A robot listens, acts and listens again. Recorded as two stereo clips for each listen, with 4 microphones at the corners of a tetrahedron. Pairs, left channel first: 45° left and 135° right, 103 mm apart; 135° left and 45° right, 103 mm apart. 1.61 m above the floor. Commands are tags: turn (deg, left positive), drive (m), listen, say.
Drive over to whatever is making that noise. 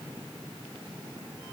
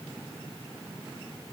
<listen/>
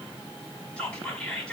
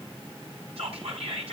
<turn deg="-30"/>
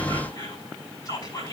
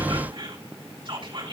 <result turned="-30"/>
<drive m="1.0"/>
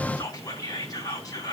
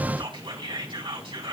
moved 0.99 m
<drive m="1.0"/>
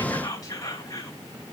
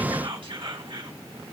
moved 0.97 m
<drive m="1.0"/>
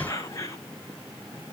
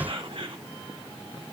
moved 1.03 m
<drive m="1.0"/>
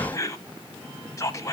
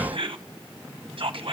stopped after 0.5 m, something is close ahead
<say>I am next to the whispering.</say>